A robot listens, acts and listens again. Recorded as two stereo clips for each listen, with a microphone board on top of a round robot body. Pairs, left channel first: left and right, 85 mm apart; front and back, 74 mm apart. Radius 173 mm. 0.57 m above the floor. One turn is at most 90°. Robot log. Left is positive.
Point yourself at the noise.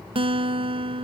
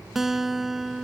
note: The guitar: 95° right.
cmd yaw -90
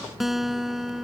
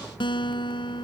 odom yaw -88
end: Found it: a guitar, straight ahead.